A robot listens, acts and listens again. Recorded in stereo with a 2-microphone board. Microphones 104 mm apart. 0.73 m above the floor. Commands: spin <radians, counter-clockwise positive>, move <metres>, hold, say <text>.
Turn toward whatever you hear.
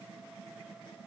hold
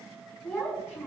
spin 0.44
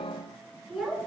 say Found it: a child speaking, straight ahead, over 4 m away.